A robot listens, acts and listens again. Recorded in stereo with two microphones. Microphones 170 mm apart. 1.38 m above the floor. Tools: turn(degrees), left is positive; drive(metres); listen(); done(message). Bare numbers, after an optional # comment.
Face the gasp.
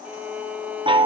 listen()
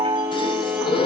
# The gasp: about 30° left or 150° left.
turn(30)
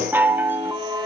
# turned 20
listen()
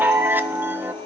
done("I heard a gasp, but can't make it out now. It was about 10° left or 130° left.")